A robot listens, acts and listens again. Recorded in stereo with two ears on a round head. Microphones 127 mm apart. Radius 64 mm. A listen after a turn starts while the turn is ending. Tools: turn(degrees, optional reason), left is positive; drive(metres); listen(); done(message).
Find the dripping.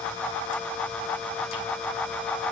listen()
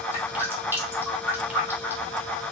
turn(degrees=-15, reason="The dripping: about 15° right or 165° right.")
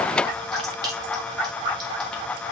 turn(degrees=-150, reason="So it is at 150° right.")
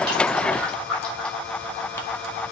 turn(degrees=10, reason="The dripping is now 10° left.")
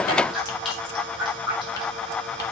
done("Facing the dripping.")